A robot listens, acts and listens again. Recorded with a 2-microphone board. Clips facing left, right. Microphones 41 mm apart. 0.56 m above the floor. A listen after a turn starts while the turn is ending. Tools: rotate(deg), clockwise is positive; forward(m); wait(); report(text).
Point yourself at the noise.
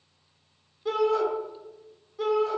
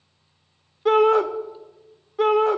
rotate(50)
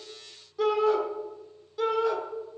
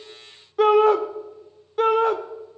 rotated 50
rotate(65)
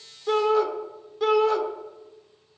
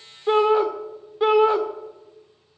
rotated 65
rotate(30)
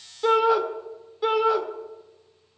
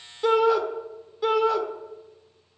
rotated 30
report("Found it: a shout, straight ahead.")